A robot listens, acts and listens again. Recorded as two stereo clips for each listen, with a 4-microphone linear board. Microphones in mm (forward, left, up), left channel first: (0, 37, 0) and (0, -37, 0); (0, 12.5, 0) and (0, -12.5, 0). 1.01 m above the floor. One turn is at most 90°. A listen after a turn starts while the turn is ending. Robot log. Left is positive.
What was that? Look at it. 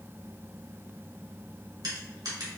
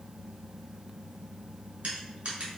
note: The crushing: about 70° right or 110° right.
cmd yaw -70
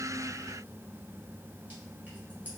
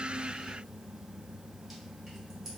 cmd idle
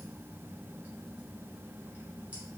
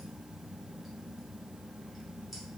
cmd idle
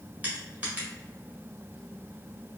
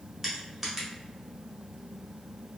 note: So it is at 20° right.
cmd yaw -20
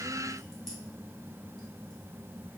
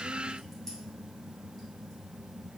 cmd idle
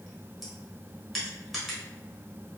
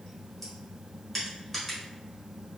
end: Found it: crushing, straight ahead.